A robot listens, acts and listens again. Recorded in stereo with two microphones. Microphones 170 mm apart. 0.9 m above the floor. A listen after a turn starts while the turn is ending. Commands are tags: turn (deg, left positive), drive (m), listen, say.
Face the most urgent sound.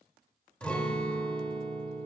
<listen/>
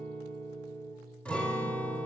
<listen/>
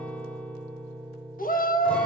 <turn deg="55"/>
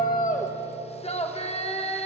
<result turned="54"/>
<turn deg="50"/>
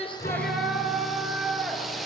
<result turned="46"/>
<say>Found it: a shout, straight ahead, 1 to 2 m away.</say>